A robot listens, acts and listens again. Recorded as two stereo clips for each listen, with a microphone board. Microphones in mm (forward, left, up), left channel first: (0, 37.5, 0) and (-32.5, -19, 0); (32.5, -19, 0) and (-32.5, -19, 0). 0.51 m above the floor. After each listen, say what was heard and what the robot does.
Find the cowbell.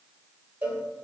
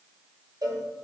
The cowbell: 175° left. Turn 175° left.
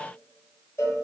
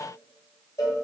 The cowbell is now 15° left. Turn 15° left.
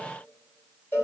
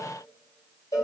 Found it: a cowbell, straight ahead, 1 to 2 m away.